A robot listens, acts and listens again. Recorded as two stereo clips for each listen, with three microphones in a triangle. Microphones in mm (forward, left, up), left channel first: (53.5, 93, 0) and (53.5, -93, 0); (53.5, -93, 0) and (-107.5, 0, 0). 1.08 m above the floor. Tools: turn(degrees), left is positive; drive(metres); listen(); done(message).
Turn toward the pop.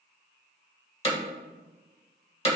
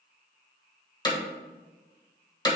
listen()
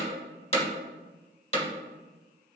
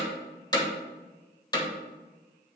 listen()
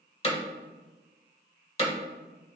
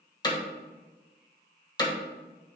done("I can't make out a pop to turn to.")